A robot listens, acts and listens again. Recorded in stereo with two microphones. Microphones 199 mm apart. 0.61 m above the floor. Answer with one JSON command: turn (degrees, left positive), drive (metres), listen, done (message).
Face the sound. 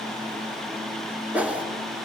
{"turn": -30}
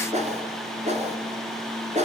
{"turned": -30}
{"turn": -145}
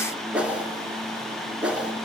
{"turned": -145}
{"done": "Facing the whoosh."}